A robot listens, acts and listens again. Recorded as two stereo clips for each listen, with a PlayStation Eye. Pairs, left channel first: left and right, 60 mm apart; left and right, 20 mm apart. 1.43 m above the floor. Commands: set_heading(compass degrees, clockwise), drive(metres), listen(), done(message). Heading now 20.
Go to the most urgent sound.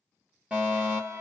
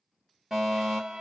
set_heading(40)
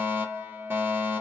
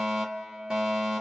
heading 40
set_heading(180)
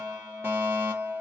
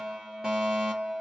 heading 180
set_heading(220)
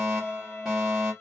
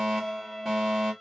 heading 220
set_heading(230)
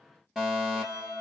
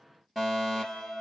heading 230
drive(1.0)
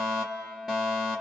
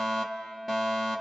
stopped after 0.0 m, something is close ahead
done("Something is in my way. I am facing the fire alarm but have not reached it.")